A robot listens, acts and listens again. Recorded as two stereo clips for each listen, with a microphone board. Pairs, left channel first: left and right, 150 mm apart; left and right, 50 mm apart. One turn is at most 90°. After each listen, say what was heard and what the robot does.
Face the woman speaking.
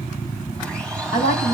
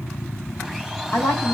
The woman speaking: about 70° left or 110° left. Turn 70° left.
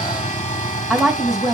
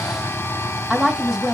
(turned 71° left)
Facing the woman speaking.